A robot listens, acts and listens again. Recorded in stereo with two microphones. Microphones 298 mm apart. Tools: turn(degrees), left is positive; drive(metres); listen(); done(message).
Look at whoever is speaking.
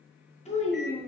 turn(degrees=20)
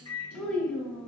done("Found it: a child speaking, straight ahead, 1 to 2 m away.")